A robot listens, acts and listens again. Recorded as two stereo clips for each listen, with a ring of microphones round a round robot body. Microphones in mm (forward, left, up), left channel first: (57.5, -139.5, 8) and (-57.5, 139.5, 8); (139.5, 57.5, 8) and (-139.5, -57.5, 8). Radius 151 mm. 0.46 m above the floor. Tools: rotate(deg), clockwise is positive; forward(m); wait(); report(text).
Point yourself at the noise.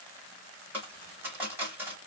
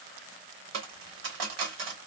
rotate(165)
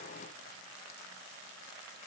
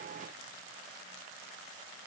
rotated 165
report("Facing where the dropped coin came from. I can't hear it now.")